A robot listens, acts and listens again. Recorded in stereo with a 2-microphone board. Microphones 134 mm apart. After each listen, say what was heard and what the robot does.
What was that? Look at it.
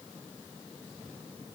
Keep listening.
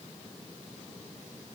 Keep listening.
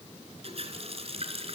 The running tap: about 45° right or 135° right. Turn 45° right.
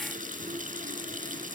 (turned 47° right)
So it is at 85° right. Turn 85° right.
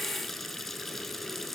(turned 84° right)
Found it: a running tap, straight ahead, 2 to 4 m away.